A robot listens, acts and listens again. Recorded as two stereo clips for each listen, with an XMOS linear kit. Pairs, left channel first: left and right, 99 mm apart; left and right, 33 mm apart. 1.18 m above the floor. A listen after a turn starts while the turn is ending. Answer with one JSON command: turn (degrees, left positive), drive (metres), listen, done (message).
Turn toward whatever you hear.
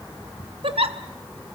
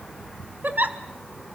{"turn": -65}
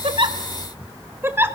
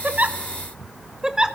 {"turn": -25}
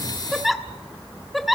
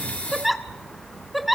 {"done": "Facing the giggle."}